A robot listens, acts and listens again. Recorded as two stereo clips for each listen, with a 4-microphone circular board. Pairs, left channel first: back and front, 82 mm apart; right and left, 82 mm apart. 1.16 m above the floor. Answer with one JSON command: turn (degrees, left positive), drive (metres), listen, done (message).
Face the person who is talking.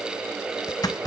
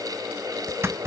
{"listen": true}
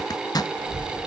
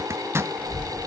{"turn": -15}
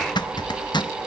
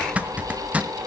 {"done": "Found it: a child speaking, straight ahead."}